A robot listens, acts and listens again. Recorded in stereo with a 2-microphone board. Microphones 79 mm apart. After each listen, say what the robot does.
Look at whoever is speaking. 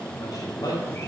Turn 55° left.
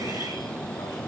Keep listening.
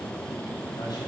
Keep listening.
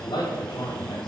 Turn 80° left.
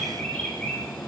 Keep listening.
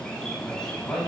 Turn 10° left.
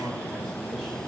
Keep listening.
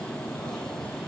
Keep listening.
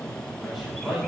Found it: a man speaking, straight ahead.